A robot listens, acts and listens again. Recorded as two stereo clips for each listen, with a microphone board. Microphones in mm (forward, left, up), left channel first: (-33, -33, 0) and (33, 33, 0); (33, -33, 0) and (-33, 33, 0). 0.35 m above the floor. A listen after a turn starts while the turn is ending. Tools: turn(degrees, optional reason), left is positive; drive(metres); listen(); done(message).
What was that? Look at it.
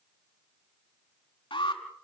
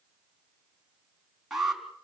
turn(degrees=-140, reason="The alarm: 140° right.")
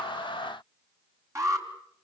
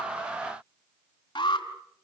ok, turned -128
turn(degrees=-10, reason="The alarm is now 10° right.")
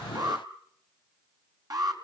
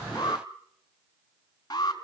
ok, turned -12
done("Facing the alarm.")